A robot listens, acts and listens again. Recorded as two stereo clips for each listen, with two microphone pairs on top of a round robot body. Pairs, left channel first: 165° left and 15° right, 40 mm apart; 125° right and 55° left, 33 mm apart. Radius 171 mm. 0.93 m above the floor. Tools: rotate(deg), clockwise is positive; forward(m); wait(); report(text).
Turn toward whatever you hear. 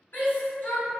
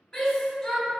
rotate(-175)
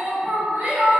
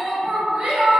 report("Facing the shout.")